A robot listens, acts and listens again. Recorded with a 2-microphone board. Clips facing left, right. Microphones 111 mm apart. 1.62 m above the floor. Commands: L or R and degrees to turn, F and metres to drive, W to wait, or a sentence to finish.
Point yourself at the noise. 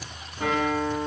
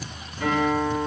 L45
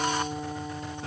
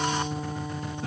Found it: a guitar, straight ahead, 1 to 2 m away.